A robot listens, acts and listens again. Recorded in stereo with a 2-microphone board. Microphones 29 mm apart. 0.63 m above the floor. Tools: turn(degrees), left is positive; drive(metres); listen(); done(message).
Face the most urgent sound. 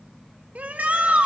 turn(degrees=-65)
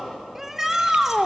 turn(degrees=-15)
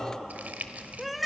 done("Found it: a shout, straight ahead.")